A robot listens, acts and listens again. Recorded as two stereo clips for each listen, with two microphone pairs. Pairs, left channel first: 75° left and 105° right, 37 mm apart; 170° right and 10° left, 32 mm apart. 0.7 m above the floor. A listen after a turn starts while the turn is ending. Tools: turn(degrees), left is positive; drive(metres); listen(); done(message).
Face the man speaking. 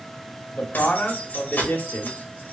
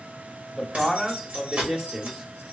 turn(degrees=75)
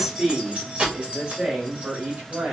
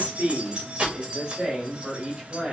turn(degrees=-55)
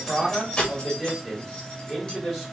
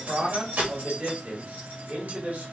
done("Facing the man speaking.")